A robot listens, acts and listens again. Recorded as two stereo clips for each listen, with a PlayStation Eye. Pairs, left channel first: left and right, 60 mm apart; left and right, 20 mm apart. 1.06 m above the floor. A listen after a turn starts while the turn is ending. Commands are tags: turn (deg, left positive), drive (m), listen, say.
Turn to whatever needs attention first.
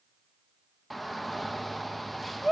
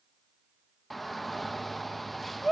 <turn deg="30"/>
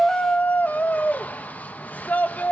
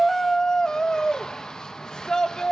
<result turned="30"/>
<turn deg="145"/>
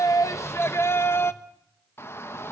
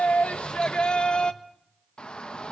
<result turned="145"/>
<turn deg="50"/>
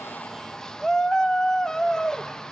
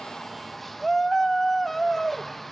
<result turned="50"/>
<turn deg="10"/>
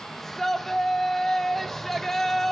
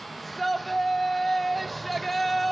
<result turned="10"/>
<say>Found it: a shout, straight ahead, 1 to 2 m away.</say>